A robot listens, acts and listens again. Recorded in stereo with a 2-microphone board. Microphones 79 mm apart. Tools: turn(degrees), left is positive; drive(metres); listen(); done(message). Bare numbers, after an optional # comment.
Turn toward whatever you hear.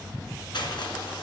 turn(90)
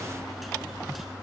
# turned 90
listen()
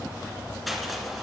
done("Found it: crushing, straight ahead, 2 to 4 m away.")